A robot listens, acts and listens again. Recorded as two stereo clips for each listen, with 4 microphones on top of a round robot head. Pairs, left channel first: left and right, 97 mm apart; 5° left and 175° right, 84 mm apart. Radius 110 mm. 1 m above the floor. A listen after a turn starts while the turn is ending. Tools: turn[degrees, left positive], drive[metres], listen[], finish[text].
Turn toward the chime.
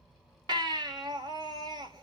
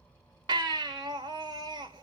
Action: listen[]
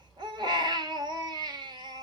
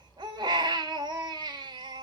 Action: listen[]
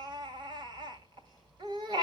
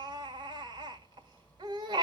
Action: finish[I can't make out a chime, only a baby crying.]